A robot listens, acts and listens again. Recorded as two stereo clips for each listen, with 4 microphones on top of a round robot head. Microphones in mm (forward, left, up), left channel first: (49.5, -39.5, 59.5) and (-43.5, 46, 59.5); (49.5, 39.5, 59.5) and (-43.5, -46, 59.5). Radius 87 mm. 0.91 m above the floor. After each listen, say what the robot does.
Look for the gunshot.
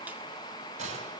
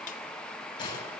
Turn 100° left.
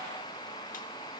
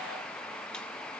I heard a gunshot from this way, but can't make it out now.